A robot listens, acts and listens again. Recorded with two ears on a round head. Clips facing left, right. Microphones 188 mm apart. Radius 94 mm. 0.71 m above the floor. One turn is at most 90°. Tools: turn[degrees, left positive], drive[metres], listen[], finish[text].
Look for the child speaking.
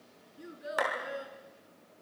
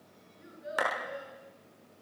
Thought: The child speaking: about 70° left or 110° left.
Action: turn[70]
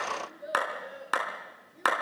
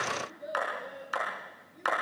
Action: finish[Found it: a child speaking, straight ahead, over 4 m away.]